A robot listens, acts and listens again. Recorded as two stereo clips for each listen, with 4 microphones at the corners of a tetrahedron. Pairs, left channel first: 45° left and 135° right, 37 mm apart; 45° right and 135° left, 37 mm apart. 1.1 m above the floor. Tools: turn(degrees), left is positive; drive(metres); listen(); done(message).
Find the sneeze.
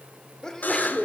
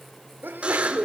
turn(degrees=115)
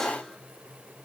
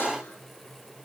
done("Facing where the sneeze came from. I can't hear it now.")